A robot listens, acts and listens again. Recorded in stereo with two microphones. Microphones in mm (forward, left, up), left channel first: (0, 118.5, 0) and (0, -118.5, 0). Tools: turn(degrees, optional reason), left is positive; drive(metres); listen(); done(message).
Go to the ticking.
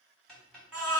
turn(degrees=30)
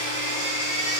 listen()
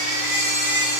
listen()
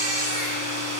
done("I heard ticking, but can't make it out now. It was about 25° right or 145° left. I did not reach it.")